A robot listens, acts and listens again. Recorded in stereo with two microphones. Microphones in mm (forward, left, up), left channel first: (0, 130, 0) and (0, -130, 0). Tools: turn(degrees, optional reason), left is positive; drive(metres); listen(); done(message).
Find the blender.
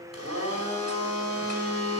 turn(degrees=-75, reason="The blender: about 75° right or 105° right.")
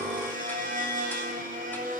turn(degrees=-30, reason="So it is at 30° right.")
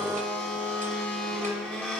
done("Facing the blender.")